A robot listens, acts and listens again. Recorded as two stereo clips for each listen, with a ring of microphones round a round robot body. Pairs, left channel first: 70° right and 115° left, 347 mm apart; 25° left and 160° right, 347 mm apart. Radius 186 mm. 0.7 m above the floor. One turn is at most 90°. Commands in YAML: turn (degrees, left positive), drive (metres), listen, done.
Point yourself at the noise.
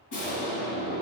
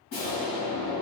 turn: -35
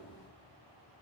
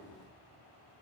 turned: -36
done: "I heard an explosion from this way, but can't make it out now."